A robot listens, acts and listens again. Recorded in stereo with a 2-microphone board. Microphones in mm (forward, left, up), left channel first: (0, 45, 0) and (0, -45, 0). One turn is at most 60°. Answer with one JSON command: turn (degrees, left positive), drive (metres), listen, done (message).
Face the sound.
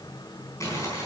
{"turn": 35}
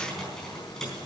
{"listen": true}
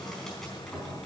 {"listen": true}
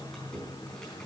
{"done": "I heard crumpling, but can't make it out now. It was about straight ahead or 110° left."}